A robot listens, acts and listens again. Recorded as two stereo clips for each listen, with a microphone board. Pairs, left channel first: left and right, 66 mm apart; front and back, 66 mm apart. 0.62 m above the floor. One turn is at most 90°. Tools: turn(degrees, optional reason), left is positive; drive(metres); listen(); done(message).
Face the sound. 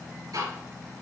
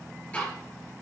turn(degrees=-70, reason="The ticking: 70° right.")
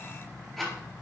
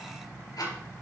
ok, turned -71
done("Facing the ticking, 2 to 4 m away.")